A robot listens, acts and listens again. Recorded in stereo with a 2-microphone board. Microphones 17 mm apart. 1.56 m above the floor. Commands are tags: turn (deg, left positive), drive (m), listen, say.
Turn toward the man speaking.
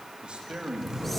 <turn deg="-90"/>
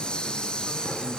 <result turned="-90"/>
<listen/>
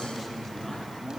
<turn deg="10"/>
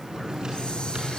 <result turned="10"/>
<listen/>
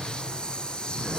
<listen/>
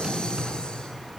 <say>I heard a man speaking from this way, but can't make it out now.</say>